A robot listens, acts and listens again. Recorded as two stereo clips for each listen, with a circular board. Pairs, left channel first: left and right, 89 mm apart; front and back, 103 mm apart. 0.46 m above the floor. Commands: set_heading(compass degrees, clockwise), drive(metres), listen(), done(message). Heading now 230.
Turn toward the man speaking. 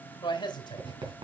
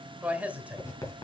set_heading(125)
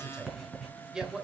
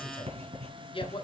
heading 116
set_heading(126)
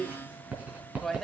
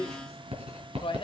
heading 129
done("Found it: a man speaking, straight ahead.")